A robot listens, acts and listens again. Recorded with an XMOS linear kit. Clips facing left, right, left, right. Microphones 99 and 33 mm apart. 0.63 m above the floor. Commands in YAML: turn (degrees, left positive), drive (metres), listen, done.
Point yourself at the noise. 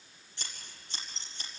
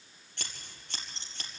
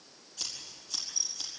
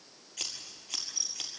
turn: -65
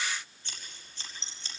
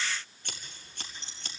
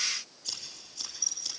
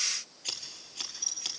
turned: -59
turn: -55
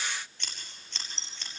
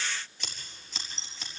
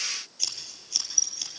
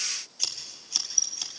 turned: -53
done: "Found it: scissors, straight ahead, over 4 m away."